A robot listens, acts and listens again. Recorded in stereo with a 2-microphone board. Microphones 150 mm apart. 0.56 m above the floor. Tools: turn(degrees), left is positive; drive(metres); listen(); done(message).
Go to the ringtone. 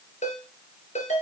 turn(degrees=55)
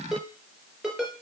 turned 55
drive(metres=1.0)
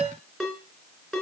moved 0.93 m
drive(metres=1.0)
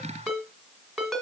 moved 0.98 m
drive(metres=1.0)
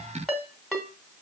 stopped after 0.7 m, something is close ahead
done("I am next to the ringtone.")